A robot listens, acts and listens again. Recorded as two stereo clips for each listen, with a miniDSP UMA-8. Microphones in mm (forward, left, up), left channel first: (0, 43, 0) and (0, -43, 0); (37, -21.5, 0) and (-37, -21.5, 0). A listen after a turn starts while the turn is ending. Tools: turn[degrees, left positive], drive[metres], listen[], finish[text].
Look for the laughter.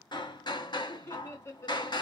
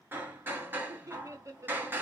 Thought: The laughter: 140° left.
Action: turn[140]
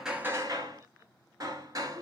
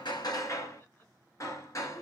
Action: listen[]
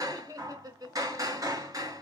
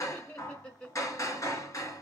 Thought: The laughter is now 75° right.
Action: turn[-75]
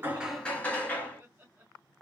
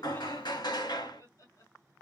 Thought: The laughter is now 25° right.
Action: turn[-25]
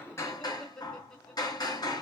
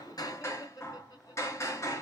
Thought: The laughter is now 10° left.
Action: turn[10]
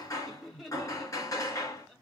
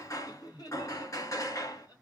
Action: finish[Found it: laughter, straight ahead.]